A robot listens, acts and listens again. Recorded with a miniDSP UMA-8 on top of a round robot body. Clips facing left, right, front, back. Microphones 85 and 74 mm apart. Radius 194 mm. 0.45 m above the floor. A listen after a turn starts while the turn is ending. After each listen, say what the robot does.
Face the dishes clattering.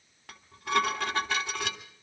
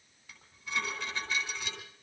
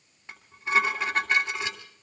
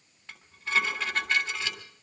Turn 75° left.
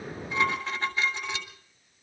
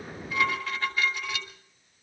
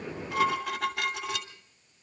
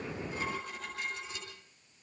Turn 25° left.
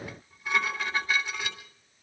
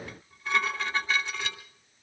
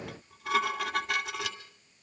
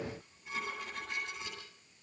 Turn 10° left.
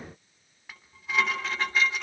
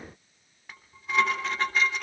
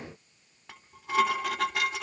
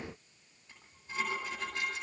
Facing the dishes clattering, 2 to 4 m away.